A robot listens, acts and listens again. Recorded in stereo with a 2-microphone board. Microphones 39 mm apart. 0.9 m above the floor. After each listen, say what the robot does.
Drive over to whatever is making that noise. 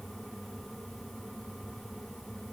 Keep listening.
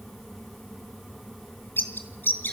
Turn 60° left.
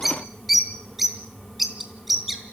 Drive 1.0 m forward.
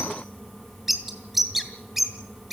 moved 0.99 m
Drive 1.0 m forward.
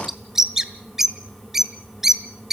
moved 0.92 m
Turn 10° right.
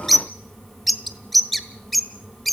Drive 1.0 m forward.
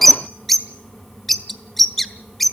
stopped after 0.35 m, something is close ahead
I am next to the bird.